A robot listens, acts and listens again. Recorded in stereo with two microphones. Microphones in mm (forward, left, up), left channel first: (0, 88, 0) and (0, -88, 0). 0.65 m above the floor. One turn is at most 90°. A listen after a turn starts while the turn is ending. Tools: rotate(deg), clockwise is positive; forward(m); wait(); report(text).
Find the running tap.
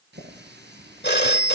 rotate(70)
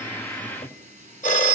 rotate(40)
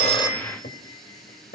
report("Facing the running tap, over 4 m away.")